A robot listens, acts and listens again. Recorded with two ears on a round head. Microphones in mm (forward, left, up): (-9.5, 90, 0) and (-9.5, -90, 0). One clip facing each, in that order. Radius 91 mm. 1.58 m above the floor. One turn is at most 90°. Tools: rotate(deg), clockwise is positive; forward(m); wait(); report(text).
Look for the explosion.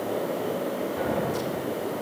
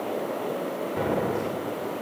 rotate(55)
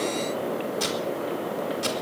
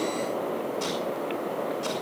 wait()
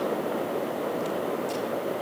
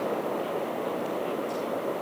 report("I heard an explosion, but can't make it out now. It was about straight ahead or 70° right.")